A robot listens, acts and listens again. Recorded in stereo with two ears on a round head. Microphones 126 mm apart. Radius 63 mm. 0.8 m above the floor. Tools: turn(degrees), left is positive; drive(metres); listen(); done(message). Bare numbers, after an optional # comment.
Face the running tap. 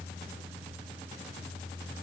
listen()
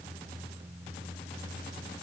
listen()
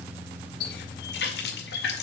turn(90)
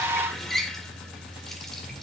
done("Facing the running tap.")